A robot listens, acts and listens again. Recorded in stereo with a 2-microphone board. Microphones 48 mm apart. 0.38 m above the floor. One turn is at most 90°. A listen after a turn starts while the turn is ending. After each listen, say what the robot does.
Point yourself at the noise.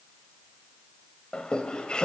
Turn 20° left.
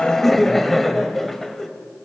Found it: laughter, straight ahead, 1 to 2 m away.